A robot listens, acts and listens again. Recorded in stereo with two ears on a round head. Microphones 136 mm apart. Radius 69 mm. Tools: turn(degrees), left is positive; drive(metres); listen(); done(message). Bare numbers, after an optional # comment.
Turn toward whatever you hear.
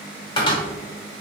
# The cupboard door: about 30° left or 150° left.
turn(30)
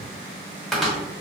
done("Found it: a cupboard door, straight ahead.")